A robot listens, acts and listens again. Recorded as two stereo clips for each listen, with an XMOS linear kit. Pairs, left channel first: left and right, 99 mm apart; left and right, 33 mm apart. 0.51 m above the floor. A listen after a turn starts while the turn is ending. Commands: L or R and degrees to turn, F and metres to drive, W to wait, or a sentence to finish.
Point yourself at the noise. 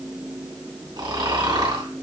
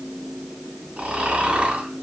R45
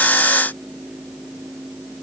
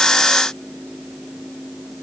W
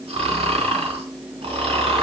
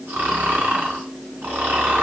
R85
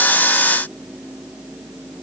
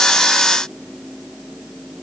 W
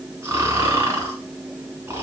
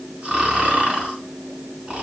R25
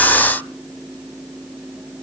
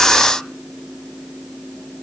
W
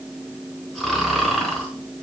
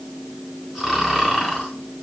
Facing the snoring.